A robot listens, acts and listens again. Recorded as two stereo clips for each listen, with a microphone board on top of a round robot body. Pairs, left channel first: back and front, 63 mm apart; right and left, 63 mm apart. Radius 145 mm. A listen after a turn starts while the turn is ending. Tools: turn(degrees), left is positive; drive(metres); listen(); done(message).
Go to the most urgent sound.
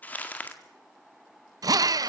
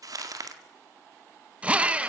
listen()
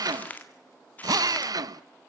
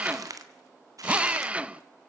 listen()
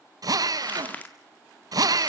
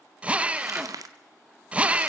done("I can't make out anything urgent, only crumpling and a drill.")